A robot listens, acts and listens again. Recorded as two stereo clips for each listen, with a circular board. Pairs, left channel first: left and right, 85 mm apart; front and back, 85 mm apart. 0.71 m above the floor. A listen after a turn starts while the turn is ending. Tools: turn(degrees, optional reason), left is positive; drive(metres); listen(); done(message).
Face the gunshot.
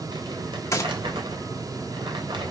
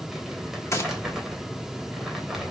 turn(degrees=45, reason="The gunshot: 45° left.")
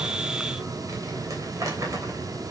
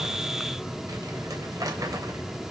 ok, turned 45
done("Facing where the gunshot came from. I can't hear it now.")